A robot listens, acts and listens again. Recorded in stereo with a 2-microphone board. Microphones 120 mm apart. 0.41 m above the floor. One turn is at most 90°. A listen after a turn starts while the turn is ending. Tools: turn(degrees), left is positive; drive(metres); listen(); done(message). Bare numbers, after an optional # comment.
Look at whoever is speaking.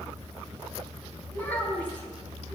# The child speaking: about 15° left or 165° left.
turn(15)
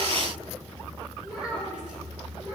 turn(-30)
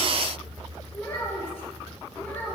# So it is at 15° left.
turn(15)
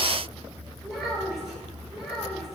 done("Facing the child speaking, over 4 m away.")